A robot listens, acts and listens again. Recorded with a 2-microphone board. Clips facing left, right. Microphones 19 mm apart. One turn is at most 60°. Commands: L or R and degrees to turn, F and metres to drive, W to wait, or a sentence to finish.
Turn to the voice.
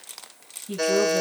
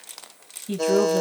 R20
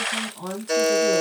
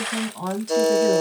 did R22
R60
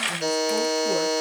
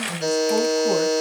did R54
R60
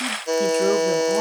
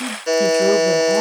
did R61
R20
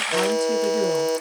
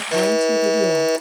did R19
Facing where the woman speaking came from. I can't hear it now.